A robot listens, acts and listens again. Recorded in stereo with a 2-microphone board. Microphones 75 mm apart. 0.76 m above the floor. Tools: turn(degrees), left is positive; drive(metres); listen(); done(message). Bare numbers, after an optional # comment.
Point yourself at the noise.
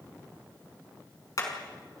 # The hammering: about 50° left or 130° left.
turn(50)
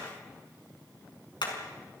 # So it is at 85° left.
turn(85)
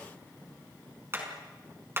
# The hammering is now 30° right.
turn(-30)
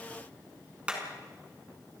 # The hammering is now 15° right.
turn(-15)
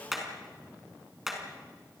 done("Facing the hammering, over 4 m away.")